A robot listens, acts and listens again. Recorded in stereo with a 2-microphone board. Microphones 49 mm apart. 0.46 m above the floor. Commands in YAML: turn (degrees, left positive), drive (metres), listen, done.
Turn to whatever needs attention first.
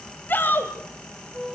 turn: 45
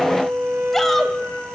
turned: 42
done: "Found it: a shout, straight ahead."